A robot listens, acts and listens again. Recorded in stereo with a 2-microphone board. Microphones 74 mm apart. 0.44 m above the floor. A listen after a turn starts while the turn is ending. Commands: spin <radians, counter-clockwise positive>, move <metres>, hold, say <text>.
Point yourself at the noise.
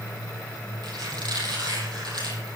spin -1.22
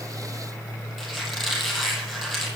say Facing the squeak.